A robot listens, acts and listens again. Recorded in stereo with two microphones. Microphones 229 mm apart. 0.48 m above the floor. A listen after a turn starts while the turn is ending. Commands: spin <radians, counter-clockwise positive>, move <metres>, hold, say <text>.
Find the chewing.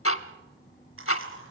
spin -1.13
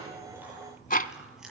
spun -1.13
say Found it: chewing, straight ahead, over 4 m away.